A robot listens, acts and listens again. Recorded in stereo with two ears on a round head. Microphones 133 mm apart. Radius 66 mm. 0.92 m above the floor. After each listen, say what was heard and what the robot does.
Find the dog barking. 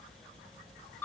Keep listening.
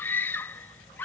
Keep listening.
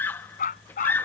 The dog barking: about 60° left or 120° left. Turn 60° left.
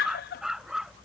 Facing the dog barking.